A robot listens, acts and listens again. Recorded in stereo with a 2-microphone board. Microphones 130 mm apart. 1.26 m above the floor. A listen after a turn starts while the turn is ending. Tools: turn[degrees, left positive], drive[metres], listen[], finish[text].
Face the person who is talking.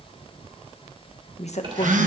Thought: The woman speaking: about 60° left or 120° left.
Action: turn[60]
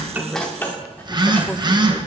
Action: listen[]
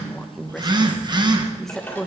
Action: finish[Found it: a woman speaking, straight ahead.]